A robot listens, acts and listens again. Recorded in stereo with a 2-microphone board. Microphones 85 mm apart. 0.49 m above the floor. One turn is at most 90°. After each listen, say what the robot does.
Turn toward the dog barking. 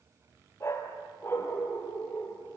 Turn 25° left.
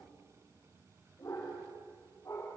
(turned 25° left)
Turn 35° left.
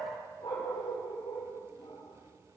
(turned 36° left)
Turn 90° left.
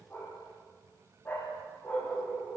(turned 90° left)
Turn 25° left.
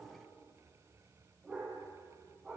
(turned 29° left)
Facing the dog barking.